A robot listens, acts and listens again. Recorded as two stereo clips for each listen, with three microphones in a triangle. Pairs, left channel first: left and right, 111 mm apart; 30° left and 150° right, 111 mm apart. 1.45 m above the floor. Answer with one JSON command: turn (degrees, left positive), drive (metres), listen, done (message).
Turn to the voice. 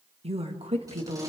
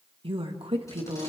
{"turn": -120}
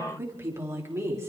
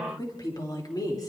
{"turn": -25}
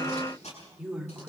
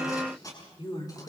{"turn": -10}
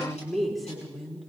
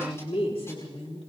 {"done": "Found it: a woman speaking, straight ahead, over 4 m away."}